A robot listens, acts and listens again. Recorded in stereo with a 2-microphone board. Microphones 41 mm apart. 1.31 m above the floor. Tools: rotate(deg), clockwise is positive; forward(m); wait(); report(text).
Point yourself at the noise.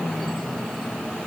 wait()
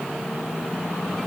wait()
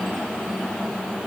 report("I can't make out anything.")